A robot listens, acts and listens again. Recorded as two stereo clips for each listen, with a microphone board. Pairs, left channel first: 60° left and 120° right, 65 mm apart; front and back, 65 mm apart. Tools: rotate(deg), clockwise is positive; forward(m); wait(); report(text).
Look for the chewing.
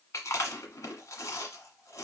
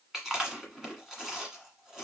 rotate(-95)
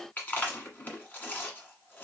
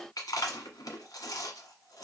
report("Found it: chewing, straight ahead, 1 to 2 m away.")